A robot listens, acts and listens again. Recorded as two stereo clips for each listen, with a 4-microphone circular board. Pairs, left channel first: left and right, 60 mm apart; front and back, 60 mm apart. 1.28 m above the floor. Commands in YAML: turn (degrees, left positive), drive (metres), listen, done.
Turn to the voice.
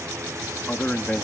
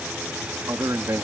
turn: 155
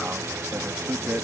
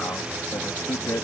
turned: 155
turn: -35
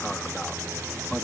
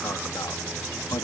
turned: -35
listen: true
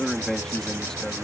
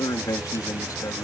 turn: 10
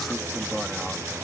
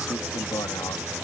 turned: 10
listen: true
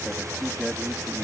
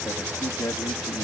done: "Facing the man speaking."